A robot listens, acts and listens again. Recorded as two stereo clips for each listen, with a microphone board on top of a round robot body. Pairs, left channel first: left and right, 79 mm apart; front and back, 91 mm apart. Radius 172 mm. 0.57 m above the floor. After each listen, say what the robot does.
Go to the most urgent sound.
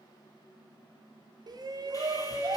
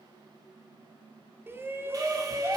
Turn 115° right.
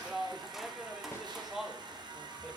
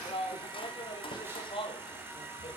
Drive 1.0 m forward.
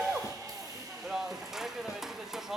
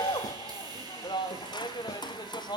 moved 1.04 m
Drive 1.0 m forward.
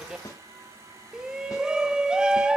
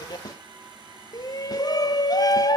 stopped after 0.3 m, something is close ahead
Turn 15° right.
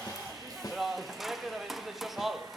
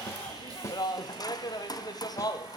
Arrived at the shout, straight ahead.